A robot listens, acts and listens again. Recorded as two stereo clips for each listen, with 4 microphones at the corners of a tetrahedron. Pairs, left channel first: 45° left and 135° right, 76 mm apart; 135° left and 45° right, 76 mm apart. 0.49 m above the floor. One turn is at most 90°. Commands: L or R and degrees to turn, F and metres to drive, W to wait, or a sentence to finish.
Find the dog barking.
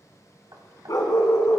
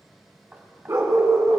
Facing the dog barking, 2 to 4 m away.